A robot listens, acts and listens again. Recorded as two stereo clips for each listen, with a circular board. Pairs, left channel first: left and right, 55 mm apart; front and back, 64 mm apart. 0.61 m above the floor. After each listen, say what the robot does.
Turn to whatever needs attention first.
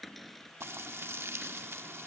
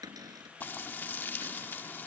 Keep listening.
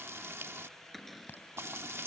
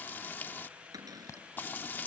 Turn 40° left.
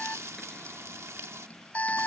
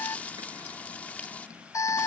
Turn 30° left.
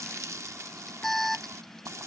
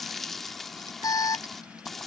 Found it: an alarm, straight ahead.